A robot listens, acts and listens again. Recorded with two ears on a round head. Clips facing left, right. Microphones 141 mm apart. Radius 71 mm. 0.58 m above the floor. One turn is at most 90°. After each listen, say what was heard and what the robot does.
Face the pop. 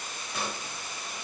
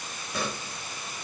Turn 90° right.
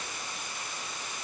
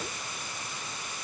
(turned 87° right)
Facing where the pop came from. I can't hear it now.